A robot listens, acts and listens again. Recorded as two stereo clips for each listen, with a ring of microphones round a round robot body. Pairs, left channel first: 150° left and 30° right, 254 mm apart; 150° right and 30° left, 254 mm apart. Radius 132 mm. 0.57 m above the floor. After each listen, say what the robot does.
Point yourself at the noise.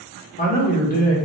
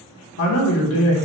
Turn 160° right.
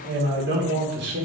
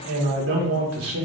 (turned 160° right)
Turn 10° left.
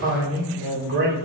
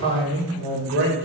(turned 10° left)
Found it: a man speaking, straight ahead, 1 to 2 m away.